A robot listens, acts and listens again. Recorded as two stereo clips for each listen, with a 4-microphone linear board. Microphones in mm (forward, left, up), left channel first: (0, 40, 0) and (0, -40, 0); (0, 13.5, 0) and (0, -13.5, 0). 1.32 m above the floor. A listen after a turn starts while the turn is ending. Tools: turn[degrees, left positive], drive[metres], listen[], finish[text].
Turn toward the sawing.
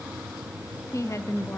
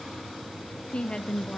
Action: listen[]
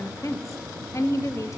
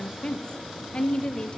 Action: listen[]
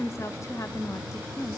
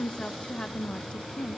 Action: finish[I can't make out sawing to turn to.]